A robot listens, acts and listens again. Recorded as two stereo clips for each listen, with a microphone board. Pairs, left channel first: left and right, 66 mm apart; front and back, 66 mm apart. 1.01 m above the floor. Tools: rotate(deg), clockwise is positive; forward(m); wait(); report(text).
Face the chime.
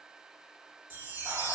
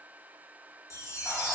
rotate(40)
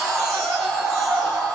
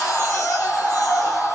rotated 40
wait()
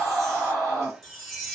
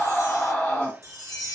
report("Found it: a chime, straight ahead, 1 to 2 m away.")